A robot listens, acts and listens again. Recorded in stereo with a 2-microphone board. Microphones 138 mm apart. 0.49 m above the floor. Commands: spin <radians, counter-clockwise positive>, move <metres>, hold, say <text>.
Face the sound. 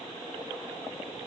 hold
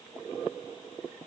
hold
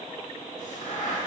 spin 1.31
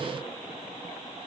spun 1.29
hold
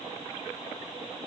say I heard a crack, but can't make it out now. It was about straight ahead or 30° left.